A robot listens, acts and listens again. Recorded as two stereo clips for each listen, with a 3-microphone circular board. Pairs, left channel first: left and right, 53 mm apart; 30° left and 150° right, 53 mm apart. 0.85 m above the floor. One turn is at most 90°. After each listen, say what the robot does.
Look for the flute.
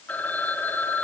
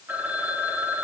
Keep listening.
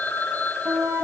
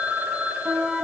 Turn 90° right.
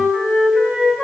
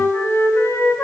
Turn 10° right.
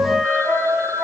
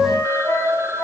Found it: a flute, straight ahead.